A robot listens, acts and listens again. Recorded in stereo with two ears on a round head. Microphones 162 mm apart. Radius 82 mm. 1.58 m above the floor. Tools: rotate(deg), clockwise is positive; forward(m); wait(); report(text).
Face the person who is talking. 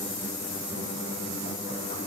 wait()
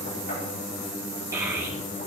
rotate(15)
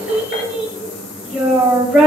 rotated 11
report("Facing the child speaking.")